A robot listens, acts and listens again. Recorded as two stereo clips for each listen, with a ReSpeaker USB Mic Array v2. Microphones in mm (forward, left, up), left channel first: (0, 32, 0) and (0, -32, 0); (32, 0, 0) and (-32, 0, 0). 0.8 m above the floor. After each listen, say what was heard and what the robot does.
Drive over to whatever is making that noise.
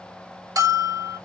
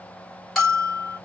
The bell: 90° right. Turn 90° right.
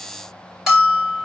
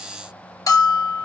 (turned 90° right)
The bell is now 10° right. Turn 10° right.
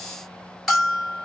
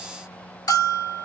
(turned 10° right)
Drive 1.0 m forward.
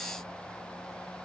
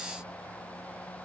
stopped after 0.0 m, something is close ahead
Keep listening.
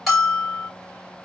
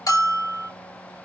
Something is in my way. I am facing the bell but have not reached it.